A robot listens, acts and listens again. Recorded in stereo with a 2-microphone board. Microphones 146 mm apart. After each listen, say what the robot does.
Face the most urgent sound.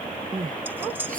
Turn 65° right.
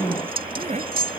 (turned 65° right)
Turn 50° right.
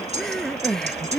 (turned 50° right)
Facing the crying.